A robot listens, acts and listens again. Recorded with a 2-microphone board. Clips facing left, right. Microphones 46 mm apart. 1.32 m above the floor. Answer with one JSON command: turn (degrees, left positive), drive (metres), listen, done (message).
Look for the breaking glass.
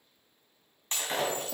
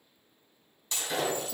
{"turn": 45}
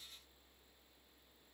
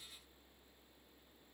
{"listen": true}
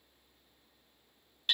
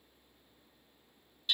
{"done": "I heard breaking glass, but can't make it out now. It was about straight ahead or 90° left."}